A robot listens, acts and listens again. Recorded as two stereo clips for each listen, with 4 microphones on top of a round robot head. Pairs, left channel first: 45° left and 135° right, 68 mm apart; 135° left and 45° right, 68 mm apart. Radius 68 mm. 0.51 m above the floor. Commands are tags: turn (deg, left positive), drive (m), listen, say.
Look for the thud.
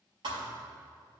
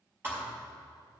<turn deg="-110"/>
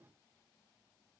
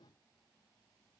<say>I heard a thud from this way, but can't make it out now.</say>